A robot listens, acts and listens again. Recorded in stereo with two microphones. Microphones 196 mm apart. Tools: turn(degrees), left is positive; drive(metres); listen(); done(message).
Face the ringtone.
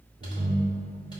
turn(degrees=-65)
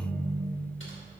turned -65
done("Found it: a ringtone, straight ahead.")